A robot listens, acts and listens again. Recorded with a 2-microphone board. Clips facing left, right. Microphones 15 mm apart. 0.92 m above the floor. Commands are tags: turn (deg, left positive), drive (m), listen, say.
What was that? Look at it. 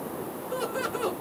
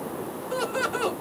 <turn deg="-50"/>
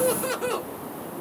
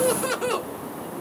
<turn deg="-25"/>
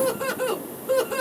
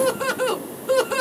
<turn deg="-40"/>
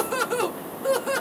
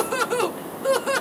<turn deg="-20"/>
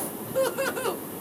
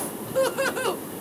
<turn deg="-15"/>
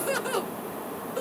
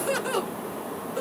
<say>Facing the laughter, 1 to 2 m away.</say>